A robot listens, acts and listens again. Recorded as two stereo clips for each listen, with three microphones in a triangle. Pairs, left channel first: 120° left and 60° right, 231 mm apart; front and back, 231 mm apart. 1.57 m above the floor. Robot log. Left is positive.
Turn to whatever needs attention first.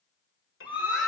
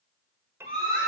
note: The scream: 25° left.
cmd yaw +25
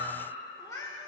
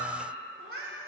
cmd idle
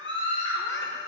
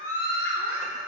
note: The scream is now 10° left.
cmd yaw +10
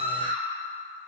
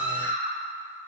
end: Found it: a scream, straight ahead, over 4 m away.